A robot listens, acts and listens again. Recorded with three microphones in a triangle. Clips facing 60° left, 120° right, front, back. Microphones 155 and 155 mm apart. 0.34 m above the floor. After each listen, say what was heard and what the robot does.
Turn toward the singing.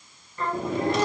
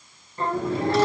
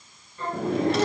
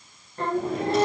The singing: straight behind. Turn 180° left.
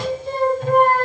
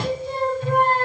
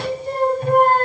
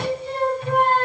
The singing is now 35° left. Turn 35° left.
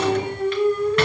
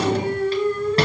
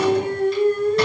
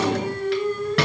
The singing is now 15° right. Turn 15° right.
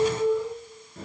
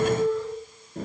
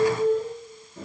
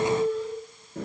The singing is now 10° right. Turn 10° right.
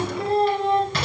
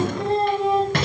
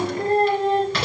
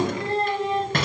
The singing is now 40° right. Turn 40° right.
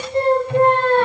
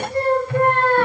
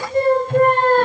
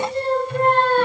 Facing the singing.